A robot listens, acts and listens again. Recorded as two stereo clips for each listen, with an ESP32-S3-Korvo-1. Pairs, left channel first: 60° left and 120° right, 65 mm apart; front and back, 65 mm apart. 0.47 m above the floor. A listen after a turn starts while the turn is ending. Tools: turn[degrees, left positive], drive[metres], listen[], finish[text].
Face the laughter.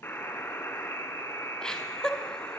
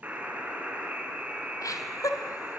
Thought: The laughter: 20° right.
Action: turn[-20]
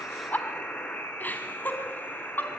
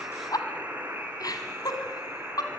Action: finish[Facing the laughter, over 4 m away.]